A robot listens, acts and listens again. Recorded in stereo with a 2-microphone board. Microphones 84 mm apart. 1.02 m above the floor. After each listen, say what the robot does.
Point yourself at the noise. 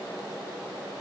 Keep listening.
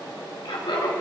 Turn 65° left.
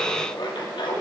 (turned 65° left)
Turn 65° left.
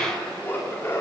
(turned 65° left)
Turn 30° left.
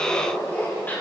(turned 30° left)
Turn 20° left.
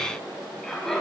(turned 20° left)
Facing the laughter.